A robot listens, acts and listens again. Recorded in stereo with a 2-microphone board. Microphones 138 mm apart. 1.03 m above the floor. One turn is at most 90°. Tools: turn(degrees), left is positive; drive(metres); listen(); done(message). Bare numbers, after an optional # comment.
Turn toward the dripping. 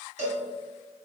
listen()
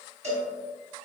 listen()
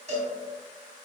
done("I can't make out dripping, only a cowbell.")